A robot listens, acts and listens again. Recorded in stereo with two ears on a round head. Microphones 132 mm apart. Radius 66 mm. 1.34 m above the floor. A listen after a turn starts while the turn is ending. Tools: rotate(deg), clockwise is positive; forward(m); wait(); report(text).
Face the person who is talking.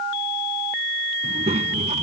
rotate(45)
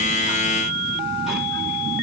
wait()
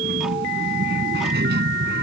rotate(90)
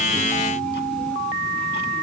wait()
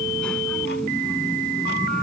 wait()
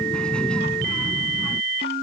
report("Found it: a child speaking, straight ahead.")